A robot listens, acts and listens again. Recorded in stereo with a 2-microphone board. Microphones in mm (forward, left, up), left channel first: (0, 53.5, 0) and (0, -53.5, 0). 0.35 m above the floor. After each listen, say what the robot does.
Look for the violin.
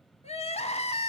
Keep listening.
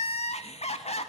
Keep listening.
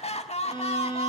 Turn 50° left.
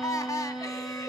Facing the violin.